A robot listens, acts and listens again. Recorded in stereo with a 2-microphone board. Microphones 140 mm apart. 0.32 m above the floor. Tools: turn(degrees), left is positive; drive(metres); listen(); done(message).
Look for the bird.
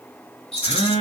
listen()
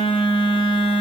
listen()
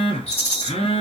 done("I can't make out a bird, only a phone buzzing and a rattle.")